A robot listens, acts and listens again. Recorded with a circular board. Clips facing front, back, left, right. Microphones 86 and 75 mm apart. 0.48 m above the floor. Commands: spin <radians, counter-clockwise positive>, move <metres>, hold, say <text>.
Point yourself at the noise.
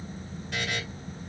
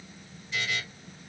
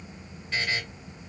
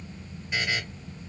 spin -0.26
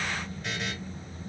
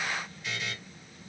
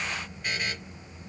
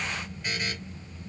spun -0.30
say Found it: a buzzer, straight ahead.